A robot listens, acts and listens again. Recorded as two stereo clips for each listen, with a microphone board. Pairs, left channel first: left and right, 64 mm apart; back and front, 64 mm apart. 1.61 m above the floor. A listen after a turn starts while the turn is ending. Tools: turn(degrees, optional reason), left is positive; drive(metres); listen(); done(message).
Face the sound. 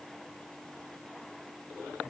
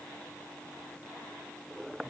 listen()
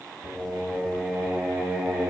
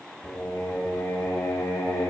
turn(degrees=-165, reason="The singing: 165° right.")
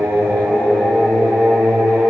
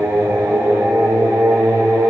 done("Facing the singing.")